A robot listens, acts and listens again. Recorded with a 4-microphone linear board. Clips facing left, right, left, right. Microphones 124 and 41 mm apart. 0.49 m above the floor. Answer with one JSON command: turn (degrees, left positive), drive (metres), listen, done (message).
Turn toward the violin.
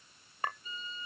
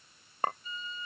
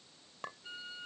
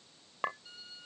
{"turn": 35}
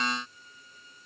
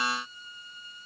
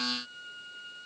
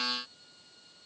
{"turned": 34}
{"turn": 110}
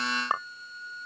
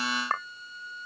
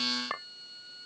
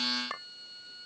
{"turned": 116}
{"done": "Facing the violin."}